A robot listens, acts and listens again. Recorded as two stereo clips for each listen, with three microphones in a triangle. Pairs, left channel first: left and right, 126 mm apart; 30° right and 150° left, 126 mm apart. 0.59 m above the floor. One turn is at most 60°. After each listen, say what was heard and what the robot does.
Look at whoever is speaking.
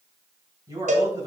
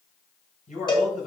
The man speaking: 30° right. Turn 30° right.
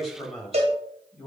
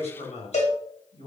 Facing the man speaking, 2 to 4 m away.